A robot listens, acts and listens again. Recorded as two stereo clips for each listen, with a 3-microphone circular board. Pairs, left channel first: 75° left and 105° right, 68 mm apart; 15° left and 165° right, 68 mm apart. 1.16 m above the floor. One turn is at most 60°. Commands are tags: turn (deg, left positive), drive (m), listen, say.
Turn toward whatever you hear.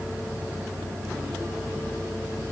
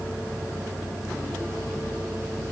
<listen/>
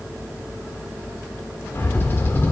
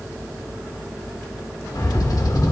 <turn deg="15"/>
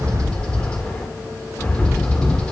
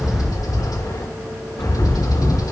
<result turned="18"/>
<say>Found it: a bird, straight ahead.</say>